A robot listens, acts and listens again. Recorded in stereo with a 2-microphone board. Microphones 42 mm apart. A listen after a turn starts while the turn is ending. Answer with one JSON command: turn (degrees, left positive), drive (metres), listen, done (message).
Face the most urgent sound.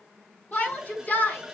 {"turn": 45}
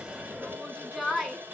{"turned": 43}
{"done": "Found it: a shout, straight ahead, over 4 m away."}